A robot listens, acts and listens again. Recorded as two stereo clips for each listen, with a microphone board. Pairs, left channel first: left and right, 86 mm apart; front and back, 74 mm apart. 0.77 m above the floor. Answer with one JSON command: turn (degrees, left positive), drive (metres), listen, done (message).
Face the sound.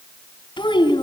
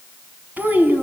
{"turn": 115}
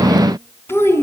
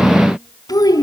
{"turn": 30}
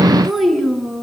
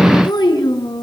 {"done": "Found it: a child speaking, straight ahead."}